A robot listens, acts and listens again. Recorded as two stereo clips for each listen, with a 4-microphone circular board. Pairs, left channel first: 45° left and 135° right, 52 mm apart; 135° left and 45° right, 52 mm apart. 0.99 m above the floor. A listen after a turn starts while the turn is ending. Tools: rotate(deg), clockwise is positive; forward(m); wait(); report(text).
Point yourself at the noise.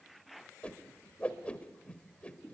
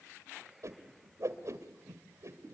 rotate(25)
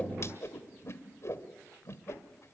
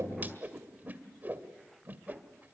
rotate(-10)
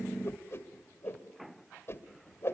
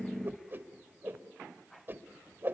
report("Found it: a whoosh, straight ahead.")